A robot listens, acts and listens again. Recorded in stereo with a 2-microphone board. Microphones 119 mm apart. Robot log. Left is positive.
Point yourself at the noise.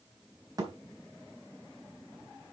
note: The thud: about 35° right or 145° right.
cmd yaw -35
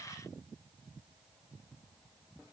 cmd idle
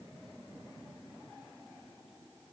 end: I heard a thud, but can't make it out now. It was about straight ahead or 110° right.